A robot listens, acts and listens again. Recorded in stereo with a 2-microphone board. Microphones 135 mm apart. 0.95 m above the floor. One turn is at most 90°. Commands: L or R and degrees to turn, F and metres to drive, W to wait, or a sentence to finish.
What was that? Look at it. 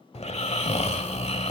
L50
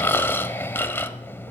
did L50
L20
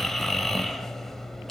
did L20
Found it: snoring, straight ahead, 1 to 2 m away.